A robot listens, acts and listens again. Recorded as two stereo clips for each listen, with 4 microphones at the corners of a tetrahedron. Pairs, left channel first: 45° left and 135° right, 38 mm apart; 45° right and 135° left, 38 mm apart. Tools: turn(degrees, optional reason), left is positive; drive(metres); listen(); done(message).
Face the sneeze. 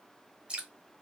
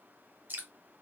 listen()
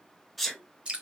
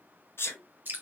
turn(degrees=-40, reason="The sneeze: 40° right.")
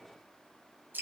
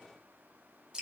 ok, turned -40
done("Facing where the sneeze came from. I can't hear it now.")